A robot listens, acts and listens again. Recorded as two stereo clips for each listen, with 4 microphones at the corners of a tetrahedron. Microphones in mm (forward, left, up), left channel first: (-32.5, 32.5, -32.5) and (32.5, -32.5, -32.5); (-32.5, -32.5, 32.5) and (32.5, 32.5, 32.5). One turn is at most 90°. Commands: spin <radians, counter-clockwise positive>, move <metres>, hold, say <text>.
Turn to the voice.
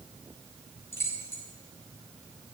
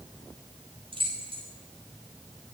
hold
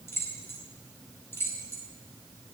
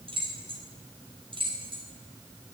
hold
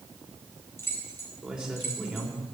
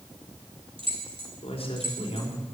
spin -1.57
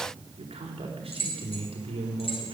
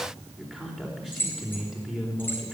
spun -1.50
spin -0.70
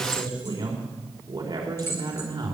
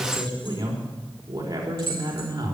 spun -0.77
say Facing the man speaking.